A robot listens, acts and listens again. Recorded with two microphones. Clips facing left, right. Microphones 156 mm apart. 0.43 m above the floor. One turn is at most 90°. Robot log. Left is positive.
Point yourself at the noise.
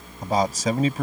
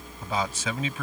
note: The man speaking: about 40° left or 140° left.
cmd yaw +40
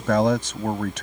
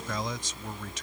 note: So it is at 95° left.
cmd yaw +90
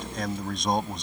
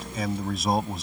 end: Facing the man speaking.